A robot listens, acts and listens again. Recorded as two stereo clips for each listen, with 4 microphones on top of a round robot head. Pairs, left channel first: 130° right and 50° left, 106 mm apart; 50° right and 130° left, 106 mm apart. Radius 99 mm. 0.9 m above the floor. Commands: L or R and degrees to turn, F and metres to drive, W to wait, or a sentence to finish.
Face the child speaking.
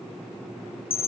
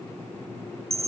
W
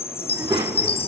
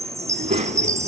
L115
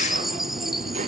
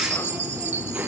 L55
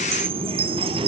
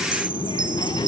Found it: a child speaking, straight ahead, 1 to 2 m away.